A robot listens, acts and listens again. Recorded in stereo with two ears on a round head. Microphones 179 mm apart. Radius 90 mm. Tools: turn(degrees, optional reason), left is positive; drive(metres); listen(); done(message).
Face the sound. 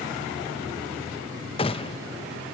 turn(degrees=25, reason="The gunshot: about 25° left or 155° left.")
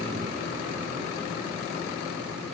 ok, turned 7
listen()
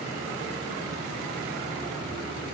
done("I heard a gunshot, but can't make it out now. It was about 20° left or 145° left.")